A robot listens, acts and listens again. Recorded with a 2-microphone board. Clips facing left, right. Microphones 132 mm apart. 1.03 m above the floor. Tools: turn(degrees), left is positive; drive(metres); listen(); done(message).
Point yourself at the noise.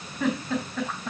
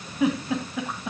turn(degrees=-30)
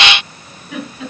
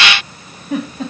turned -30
turn(degrees=-140)
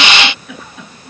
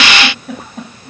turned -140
turn(degrees=-40)
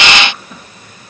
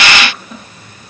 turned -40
done("Facing the giggle.")